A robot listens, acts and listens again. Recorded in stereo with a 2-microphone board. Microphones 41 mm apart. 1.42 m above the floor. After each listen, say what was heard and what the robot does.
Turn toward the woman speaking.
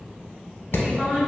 The woman speaking: about 25° right or 155° right. Turn 25° right.
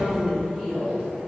The woman speaking: about 20° right or 160° right. Turn 20° right.
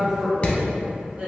The woman speaking: about 30° right or 150° right. Turn 30° right.
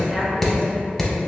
Keep listening.
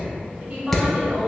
The woman speaking: about 30° right or 150° right. Turn 30° right.
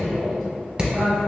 Found it: a woman speaking, straight ahead.